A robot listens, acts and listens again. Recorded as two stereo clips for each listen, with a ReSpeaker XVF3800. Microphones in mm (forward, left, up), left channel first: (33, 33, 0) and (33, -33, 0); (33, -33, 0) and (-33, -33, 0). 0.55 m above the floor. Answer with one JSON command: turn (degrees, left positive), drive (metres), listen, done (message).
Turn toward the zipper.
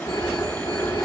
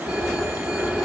{"listen": true}
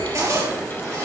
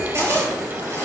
{"turn": -130}
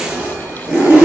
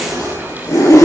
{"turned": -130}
{"turn": -20}
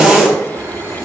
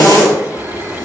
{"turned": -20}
{"done": "Found it: a zipper, straight ahead, over 4 m away."}